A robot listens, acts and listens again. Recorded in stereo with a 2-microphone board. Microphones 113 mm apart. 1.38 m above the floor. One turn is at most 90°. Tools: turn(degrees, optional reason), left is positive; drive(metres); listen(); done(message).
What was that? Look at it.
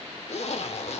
turn(degrees=70, reason="The zipper: about 70° left or 110° left.")
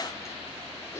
turn(degrees=30, reason="So it is at 30° left.")
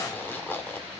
turn(degrees=20, reason="The zipper is now 20° left.")
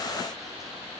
listen()
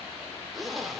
done("Facing the zipper.")